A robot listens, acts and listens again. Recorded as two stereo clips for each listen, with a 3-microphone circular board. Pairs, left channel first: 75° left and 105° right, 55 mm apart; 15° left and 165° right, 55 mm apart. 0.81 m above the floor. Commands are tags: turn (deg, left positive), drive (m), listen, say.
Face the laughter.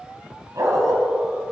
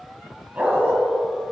<listen/>
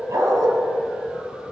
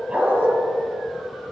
<listen/>
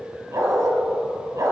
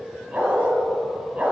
<say>I can't make out laughter to turn to.</say>